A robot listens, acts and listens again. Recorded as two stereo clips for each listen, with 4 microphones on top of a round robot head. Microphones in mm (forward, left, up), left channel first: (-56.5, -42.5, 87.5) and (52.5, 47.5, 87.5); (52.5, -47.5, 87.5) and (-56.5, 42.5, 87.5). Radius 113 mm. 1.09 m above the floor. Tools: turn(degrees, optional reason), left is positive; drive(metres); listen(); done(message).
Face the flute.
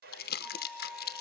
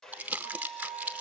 turn(degrees=120, reason="The flute: 120° left.")
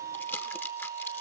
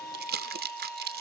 turn(degrees=45, reason="The flute is now 45° left.")
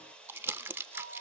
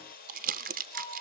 listen()
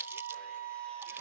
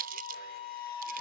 turn(degrees=15, reason="The flute is now 15° left.")
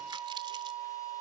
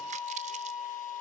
done("Found it: a flute, straight ahead.")